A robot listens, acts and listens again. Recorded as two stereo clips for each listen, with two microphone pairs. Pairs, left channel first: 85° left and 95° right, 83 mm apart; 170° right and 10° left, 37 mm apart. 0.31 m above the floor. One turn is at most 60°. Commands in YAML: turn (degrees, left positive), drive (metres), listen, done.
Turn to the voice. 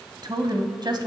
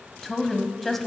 turn: -60
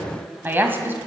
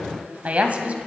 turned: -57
turn: -30
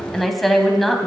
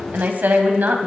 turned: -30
done: "Facing the woman speaking, 1 to 2 m away."